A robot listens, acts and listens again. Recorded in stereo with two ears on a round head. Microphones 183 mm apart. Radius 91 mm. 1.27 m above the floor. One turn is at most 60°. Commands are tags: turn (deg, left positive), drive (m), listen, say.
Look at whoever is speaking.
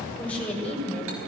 <turn deg="30"/>
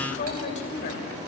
<turn deg="60"/>
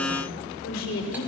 <turn deg="60"/>
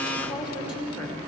<turn deg="25"/>
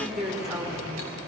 <say>Found it: a woman speaking, straight ahead.</say>